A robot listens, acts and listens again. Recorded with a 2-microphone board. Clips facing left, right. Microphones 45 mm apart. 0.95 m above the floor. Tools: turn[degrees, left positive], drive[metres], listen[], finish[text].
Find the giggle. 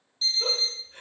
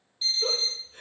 Thought: The giggle: about 50° left or 130° left.
Action: turn[50]
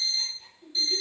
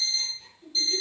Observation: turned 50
Thought: So it is at 15° left.
Action: turn[15]
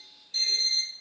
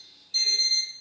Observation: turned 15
Action: listen[]
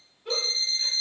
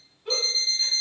Action: finish[Found it: a giggle, straight ahead.]